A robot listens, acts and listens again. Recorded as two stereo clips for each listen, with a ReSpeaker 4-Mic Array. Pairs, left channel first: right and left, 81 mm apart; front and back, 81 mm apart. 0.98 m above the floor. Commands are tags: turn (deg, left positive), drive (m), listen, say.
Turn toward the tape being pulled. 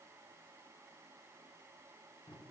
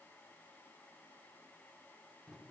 <listen/>
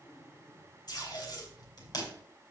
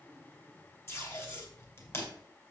<turn deg="-55"/>
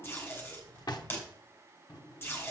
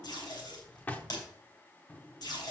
<turn deg="-30"/>
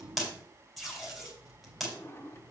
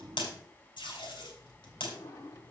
<say>Found it: tape being pulled, straight ahead, 2 to 4 m away.</say>